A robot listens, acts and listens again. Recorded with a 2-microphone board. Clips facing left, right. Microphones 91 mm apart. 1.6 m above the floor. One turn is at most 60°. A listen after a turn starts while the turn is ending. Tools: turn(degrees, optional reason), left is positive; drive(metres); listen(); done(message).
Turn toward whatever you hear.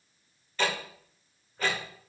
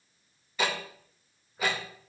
turn(degrees=-30)
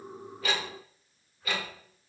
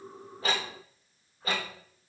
turn(degrees=-60, reason="So it is at 140° right.")
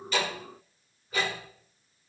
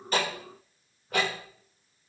turn(degrees=-60, reason="The ticking is now 110° right.")
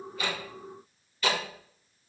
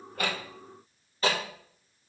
turn(degrees=-35, reason="The ticking is now 35° right.")
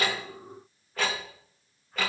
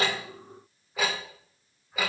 turn(degrees=-10, reason="The ticking is now 10° right.")
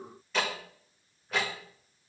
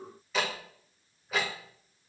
done("Found it: ticking, straight ahead, 1 to 2 m away.")